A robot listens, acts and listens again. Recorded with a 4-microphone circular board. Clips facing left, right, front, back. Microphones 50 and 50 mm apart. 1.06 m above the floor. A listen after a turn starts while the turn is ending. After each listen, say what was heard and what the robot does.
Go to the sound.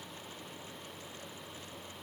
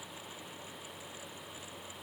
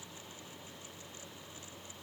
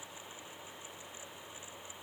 Keep listening.
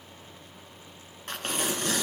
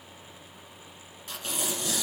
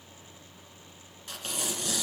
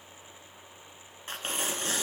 The tearing paper: 125° left. Turn 125° left.
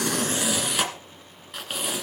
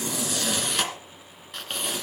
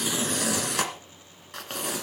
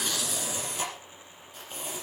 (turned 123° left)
Drive 1.0 m forward.
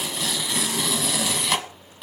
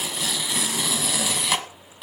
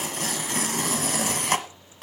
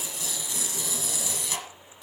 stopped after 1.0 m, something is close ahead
I am next to the tearing paper.